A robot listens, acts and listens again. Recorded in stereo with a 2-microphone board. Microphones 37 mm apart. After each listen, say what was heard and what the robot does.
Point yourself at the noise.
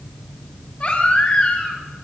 The baby crying: about 30° left or 150° left. Turn 30° left.
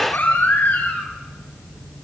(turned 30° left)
So it is at 120° left. Turn 120° left.
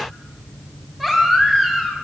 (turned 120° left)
Facing the baby crying, over 4 m away.